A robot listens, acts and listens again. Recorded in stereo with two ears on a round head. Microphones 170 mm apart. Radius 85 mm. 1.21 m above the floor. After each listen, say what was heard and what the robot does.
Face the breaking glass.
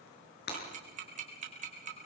The breaking glass: about 55° left or 125° left. Turn 55° left.
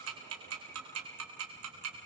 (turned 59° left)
Keep listening.
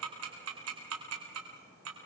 I heard breaking glass, but can't make it out now. It was about 5° right or 65° left.